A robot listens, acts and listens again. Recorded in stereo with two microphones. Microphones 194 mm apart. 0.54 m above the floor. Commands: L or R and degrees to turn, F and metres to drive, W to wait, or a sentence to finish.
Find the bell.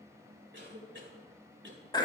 W
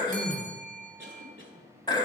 R45
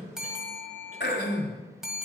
Found it: a bell, straight ahead.